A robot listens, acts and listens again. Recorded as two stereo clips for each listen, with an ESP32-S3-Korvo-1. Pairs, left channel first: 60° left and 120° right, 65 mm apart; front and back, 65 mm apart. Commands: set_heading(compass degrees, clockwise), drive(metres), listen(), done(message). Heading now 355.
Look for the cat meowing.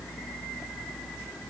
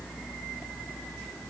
listen()
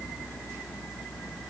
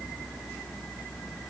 listen()
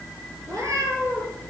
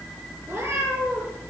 set_heading(135)
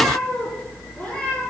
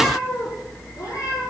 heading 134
set_heading(144)
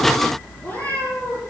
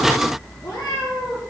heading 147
done("Found it: a cat meowing, straight ahead, over 4 m away.")